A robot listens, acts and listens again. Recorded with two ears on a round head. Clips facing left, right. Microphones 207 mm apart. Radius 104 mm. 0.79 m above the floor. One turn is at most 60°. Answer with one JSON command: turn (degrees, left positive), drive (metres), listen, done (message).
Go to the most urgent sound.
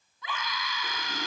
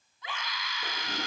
{"turn": 60}
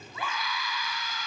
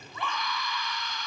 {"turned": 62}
{"drive": 1.0}
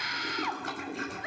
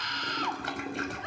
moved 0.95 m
{"drive": 1.0}
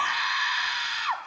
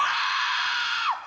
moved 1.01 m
{"drive": 1.0}
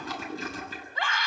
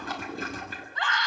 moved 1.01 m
{"turn": 10}
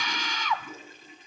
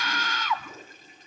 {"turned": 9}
{"drive": 1.0}
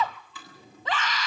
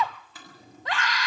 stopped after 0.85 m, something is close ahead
{"done": "Arrived at the scream, straight ahead."}